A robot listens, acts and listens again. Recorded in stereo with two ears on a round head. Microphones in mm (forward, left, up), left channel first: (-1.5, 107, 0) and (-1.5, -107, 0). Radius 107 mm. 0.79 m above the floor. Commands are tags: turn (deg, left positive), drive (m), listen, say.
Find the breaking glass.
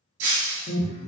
<turn deg="-60"/>
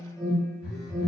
<listen/>
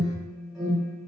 <say>I heard breaking glass, but can't make it out now. It was about straight ahead or 60° right.</say>